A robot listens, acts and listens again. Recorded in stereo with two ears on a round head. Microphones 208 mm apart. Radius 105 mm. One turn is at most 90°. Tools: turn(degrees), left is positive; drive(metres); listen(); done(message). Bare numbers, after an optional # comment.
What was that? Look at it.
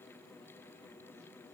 listen()
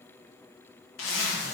# The zipper: about 60° left or 120° left.
turn(60)
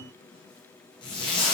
# So it is at 25° left.
turn(25)
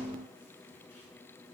listen()
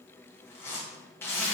# The zipper is now 10° left.
turn(10)
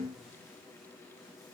listen()
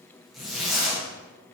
done("Facing the zipper, under 1 m away.")